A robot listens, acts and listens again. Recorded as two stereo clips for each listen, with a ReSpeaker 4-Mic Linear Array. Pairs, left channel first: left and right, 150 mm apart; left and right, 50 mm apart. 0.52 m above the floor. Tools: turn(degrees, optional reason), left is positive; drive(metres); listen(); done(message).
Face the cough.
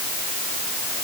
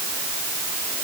listen()
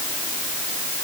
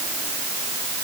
listen()
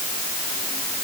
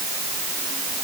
done("I can't make out a cough.")